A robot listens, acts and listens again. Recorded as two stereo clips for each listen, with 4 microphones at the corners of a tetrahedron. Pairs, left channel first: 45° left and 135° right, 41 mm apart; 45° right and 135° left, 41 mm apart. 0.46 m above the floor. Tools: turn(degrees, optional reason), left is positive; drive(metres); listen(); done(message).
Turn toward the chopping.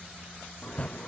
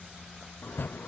turn(degrees=-15, reason="The chopping: 15° right.")
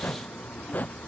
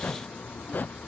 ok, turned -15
done("Found it: chopping, straight ahead.")